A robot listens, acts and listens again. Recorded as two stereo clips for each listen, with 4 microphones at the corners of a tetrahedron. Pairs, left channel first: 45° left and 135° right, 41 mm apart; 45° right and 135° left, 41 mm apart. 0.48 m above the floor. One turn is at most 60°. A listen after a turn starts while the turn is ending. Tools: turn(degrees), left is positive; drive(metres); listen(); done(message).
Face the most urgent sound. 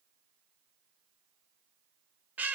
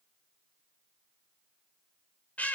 listen()
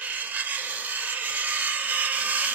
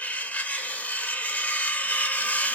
listen()
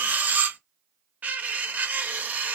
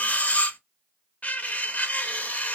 done("I can't make out anything urgent, only cutlery clinking.")